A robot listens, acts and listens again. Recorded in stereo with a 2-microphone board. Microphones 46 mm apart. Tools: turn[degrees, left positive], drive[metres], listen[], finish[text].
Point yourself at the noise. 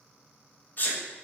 Thought: The sneeze: about 45° left or 135° left.
Action: turn[45]
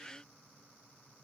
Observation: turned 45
Action: listen[]
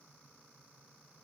Action: finish[I heard a sneeze, but can't make it out now. It was about straight ahead or 90° left.]